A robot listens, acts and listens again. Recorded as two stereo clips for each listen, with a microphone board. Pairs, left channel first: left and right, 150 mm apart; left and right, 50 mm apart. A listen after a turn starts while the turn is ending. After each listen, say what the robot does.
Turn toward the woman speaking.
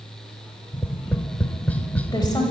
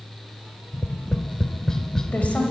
Turn 25° left.
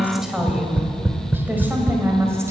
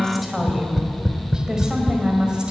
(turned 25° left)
Turn 20° right.
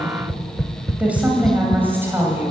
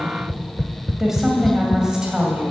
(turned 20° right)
Turn 15° right.
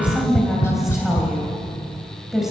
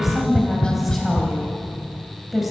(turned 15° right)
Found it: a woman speaking, straight ahead.